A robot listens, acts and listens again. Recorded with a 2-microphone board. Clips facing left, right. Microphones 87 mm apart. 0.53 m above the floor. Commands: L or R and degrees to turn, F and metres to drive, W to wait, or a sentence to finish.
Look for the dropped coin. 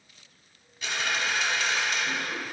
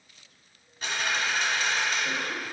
R40
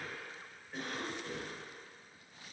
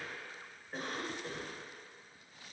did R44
W
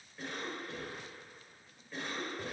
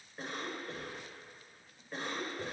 I heard a dropped coin, but can't make it out now. It was about 5° left or 95° right.